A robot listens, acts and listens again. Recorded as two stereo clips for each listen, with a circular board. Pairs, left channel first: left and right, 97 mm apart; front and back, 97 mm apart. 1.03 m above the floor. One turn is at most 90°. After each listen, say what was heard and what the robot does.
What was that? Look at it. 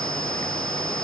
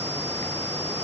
Keep listening.
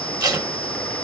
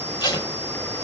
The tape being pulled: 45° right. Turn 45° right.
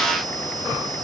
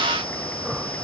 Keep listening.
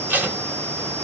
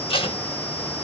The tape being pulled is now 20° right. Turn 20° right.
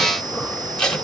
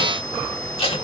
Facing the tape being pulled.